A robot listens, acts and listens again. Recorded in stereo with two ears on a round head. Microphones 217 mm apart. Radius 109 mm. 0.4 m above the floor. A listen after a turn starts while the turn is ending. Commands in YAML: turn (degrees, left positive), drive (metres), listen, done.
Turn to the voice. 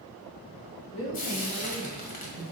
turn: 90
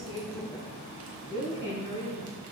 turn: -15
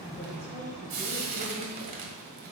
turn: -15
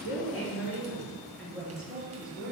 done: "Found it: a woman speaking, straight ahead."